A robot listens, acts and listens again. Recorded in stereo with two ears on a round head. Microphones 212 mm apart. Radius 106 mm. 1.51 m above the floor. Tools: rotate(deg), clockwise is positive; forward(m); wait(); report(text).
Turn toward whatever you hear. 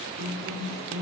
rotate(40)
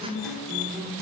report("Facing the guitar.")